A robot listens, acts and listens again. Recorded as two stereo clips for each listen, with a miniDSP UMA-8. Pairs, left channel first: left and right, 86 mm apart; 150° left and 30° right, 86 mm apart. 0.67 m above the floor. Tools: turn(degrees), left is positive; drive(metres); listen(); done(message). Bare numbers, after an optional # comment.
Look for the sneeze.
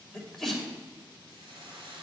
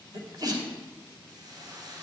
done("Facing the sneeze, 2 to 4 m away.")